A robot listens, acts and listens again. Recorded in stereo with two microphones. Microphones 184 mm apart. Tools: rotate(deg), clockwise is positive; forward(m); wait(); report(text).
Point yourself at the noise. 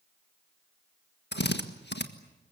rotate(-75)
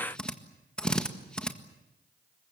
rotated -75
report("Found it: a drill, straight ahead.")